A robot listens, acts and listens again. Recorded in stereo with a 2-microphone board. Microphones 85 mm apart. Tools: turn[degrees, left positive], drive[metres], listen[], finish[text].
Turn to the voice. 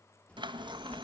Action: turn[30]
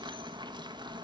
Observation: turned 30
Thought: So it is at 20° right.
Action: turn[-20]
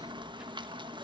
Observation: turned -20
Thought: The child speaking is now 10° right.
Action: turn[-10]
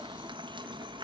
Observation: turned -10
Action: listen[]
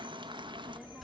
Action: finish[Facing the child speaking, 2 to 4 m away.]